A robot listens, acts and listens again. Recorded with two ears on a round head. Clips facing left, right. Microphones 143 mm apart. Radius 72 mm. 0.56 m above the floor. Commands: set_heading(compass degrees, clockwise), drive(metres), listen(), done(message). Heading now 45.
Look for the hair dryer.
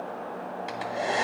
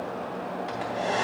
set_heading(15)
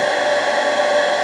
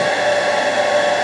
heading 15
set_heading(30)
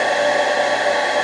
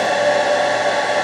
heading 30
done("Facing the hair dryer.")